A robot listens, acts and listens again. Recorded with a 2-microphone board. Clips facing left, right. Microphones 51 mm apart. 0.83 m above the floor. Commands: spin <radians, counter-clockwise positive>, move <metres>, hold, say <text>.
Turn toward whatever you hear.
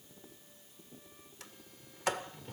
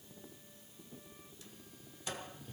spin 1.31
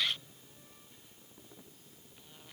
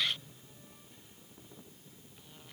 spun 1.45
spin -0.17
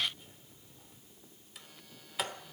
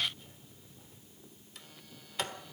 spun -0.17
say Facing the sliding door, 1 to 2 m away.